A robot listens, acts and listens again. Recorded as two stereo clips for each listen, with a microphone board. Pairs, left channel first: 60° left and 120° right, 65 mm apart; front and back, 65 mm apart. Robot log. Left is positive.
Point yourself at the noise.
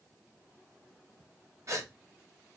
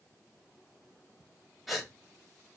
note: The gasp: 95° right.
cmd yaw -95
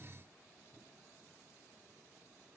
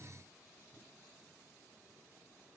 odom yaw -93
end: Facing where the gasp came from. I can't hear it now.